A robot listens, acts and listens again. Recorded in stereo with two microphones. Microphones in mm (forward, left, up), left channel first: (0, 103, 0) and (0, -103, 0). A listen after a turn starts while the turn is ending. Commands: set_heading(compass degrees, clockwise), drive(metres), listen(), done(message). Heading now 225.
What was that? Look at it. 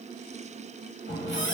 set_heading(155)
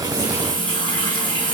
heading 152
set_heading(127)
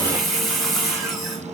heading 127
done("Found it: a running tap, straight ahead, under 1 m away.")